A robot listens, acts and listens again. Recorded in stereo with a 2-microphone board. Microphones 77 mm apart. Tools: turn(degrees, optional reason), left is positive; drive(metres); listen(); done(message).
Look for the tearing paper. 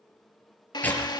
turn(degrees=20, reason="The tearing paper: about 20° left or 160° left.")
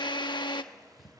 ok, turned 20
listen()
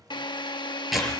done("Facing the tearing paper, over 4 m away.")